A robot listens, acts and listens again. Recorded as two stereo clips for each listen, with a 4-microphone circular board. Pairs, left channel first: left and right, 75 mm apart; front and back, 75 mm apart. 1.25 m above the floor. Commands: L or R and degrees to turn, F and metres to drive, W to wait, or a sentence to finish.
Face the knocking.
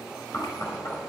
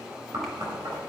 L140
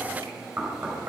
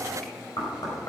R30
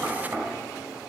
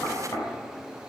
R35
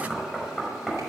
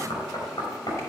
Facing the knocking, over 4 m away.